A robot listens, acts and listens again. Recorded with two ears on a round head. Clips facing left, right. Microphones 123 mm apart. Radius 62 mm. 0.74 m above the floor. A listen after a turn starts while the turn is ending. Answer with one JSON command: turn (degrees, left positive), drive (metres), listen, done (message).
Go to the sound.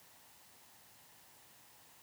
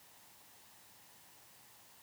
{"listen": true}
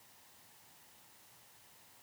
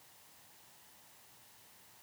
{"listen": true}
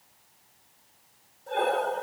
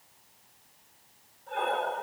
{"turn": 45}
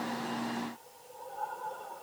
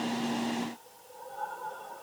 {"drive": 1.0}
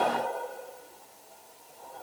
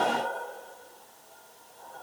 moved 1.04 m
{"turn": 15}
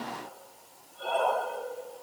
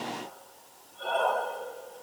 {"drive": 1.0}
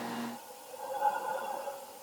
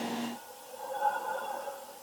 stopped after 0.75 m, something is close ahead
{"done": "Arrived at the breathing, straight ahead."}